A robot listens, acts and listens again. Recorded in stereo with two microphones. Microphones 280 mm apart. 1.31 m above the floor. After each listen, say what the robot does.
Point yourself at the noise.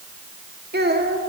Turn 35° right.
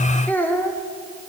Found it: a child speaking, straight ahead.